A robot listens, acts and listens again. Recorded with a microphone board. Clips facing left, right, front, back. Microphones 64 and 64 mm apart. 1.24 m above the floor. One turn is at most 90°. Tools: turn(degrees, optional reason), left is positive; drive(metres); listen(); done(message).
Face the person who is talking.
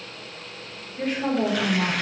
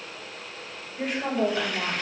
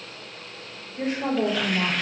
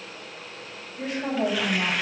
done("Found it: a woman speaking, straight ahead.")